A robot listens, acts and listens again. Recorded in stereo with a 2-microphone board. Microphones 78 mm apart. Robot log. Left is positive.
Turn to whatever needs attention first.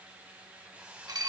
cmd idle
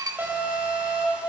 note: The alarm: about 30° right or 150° right.
cmd yaw -30
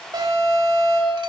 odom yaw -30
note: So it is at 120° right.
cmd yaw -120
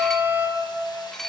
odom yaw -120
note: The alarm is now 25° right.
cmd yaw -25
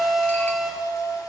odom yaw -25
end: Facing the alarm.